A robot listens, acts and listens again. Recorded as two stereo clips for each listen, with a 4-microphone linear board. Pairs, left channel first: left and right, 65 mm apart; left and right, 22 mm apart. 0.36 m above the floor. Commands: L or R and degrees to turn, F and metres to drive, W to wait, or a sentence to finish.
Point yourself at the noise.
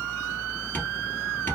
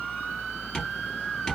L30
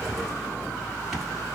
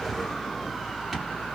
Facing the tapping, 1 to 2 m away.